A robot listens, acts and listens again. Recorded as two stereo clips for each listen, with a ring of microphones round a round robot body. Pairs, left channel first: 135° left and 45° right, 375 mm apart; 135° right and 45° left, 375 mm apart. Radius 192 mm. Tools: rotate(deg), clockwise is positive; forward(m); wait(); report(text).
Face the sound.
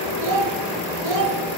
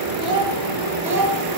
rotate(40)
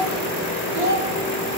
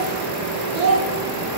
report("Facing the child speaking, 1 to 2 m away.")